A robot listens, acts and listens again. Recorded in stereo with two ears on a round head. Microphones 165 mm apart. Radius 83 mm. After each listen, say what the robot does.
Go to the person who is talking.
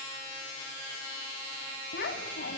Turn 60° left.
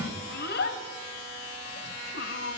Turn 60° left.
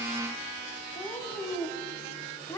Turn 20° left.
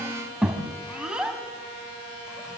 Drive 1.0 m forward.
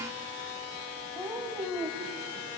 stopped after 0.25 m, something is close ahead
Something is in my way. I am facing the child speaking but have not reached it.